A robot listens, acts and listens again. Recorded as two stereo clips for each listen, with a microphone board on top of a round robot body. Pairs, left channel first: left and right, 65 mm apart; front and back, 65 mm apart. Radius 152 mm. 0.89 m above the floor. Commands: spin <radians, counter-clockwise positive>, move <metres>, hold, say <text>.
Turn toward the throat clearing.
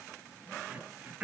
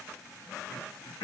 spin -0.35
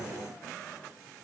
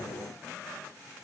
hold
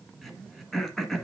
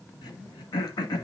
say Found it: throat clearing, straight ahead, 1 to 2 m away.